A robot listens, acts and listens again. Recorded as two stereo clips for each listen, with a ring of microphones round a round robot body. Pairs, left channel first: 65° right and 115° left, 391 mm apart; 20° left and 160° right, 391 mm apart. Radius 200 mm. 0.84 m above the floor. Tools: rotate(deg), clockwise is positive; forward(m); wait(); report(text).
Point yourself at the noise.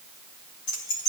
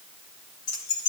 rotate(30)
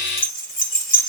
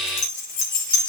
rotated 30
report("Found it: keys jangling, straight ahead.")